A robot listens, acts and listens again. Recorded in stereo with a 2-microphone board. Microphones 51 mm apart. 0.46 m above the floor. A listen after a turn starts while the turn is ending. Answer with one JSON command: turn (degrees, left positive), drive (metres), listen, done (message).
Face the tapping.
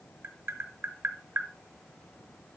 {"turn": -55}
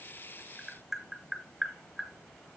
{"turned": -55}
{"done": "Facing the tapping, under 1 m away."}